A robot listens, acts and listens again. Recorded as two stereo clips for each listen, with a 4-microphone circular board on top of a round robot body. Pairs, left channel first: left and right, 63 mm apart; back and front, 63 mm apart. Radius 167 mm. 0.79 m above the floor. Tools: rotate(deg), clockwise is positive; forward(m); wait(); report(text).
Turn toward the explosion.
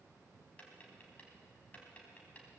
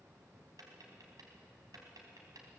wait()
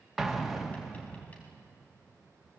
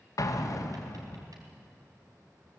rotate(175)
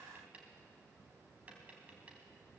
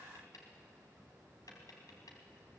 report("I heard an explosion from this way, but can't make it out now.")